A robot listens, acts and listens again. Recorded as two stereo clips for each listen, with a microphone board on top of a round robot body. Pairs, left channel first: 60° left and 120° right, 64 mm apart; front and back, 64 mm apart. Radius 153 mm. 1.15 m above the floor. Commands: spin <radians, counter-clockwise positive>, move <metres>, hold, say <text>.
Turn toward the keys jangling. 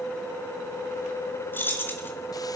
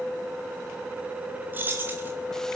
spin 2.09
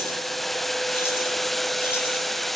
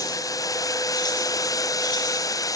hold
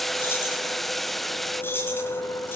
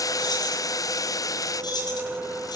say Found it: keys jangling, straight ahead, over 4 m away.